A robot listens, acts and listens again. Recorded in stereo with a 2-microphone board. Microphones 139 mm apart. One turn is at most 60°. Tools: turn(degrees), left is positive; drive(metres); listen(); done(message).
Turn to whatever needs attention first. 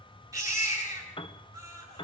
turn(degrees=-25)
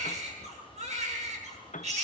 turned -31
turn(degrees=-60)
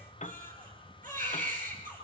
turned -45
turn(degrees=-60)
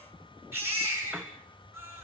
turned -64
turn(degrees=-15)
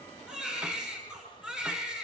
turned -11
done("Facing the baby crying, over 4 m away.")